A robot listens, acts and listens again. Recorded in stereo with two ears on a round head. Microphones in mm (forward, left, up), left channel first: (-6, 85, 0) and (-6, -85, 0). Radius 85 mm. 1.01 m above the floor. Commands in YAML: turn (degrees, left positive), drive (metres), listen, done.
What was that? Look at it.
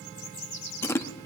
turn: 30
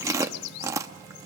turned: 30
turn: -15
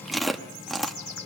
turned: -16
done: "Found it: chewing, straight ahead."